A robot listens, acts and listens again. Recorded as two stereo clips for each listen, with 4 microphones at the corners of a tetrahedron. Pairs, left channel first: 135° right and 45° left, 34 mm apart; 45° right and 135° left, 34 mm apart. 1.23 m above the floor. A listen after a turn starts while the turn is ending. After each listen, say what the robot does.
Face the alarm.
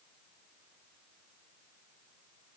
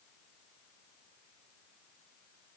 Keep listening.
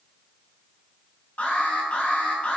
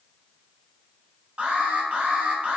Turn 165° right.
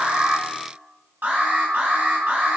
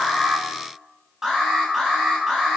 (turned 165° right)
Turn 65° left.
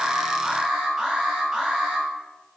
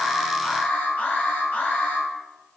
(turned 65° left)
Turn 15° right.
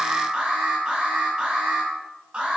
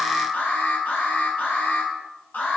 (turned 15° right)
Facing the alarm.